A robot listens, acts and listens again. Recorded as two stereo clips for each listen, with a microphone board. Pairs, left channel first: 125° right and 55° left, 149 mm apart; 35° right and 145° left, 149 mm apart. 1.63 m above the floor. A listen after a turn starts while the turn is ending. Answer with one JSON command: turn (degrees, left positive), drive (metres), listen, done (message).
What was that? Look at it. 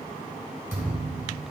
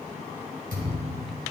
{"turn": 130}
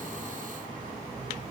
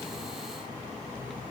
{"done": "Facing where the thud came from. I can't hear it now."}